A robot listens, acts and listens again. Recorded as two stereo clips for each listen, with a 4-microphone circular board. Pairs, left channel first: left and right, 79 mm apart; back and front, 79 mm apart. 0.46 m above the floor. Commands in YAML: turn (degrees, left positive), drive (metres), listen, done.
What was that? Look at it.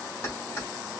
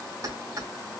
turn: 35
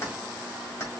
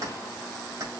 turn: 35
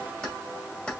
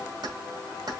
turn: 15
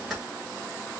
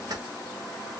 listen: true
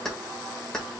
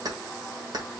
turn: 10
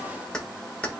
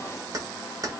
turn: 20
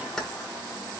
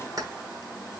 turn: 10
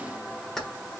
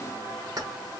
done: "Facing the keys jangling."